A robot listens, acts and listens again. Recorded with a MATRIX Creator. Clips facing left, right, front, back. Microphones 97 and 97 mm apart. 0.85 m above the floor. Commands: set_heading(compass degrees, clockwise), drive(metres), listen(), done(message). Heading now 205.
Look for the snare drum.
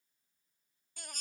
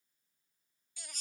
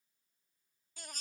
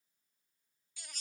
listen()
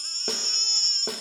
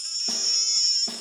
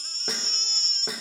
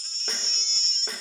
set_heading(120)
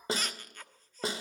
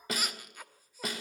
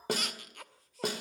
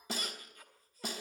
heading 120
set_heading(90)
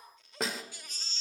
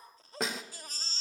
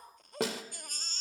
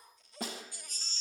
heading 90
done("Facing the snare drum.")